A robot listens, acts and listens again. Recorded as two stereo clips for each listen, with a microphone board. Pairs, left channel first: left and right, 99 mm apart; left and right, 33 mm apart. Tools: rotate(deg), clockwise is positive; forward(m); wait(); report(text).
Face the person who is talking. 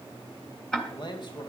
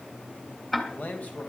rotate(-50)
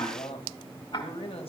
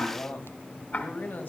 rotate(-80)
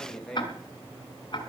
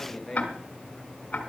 report("Facing the man speaking.")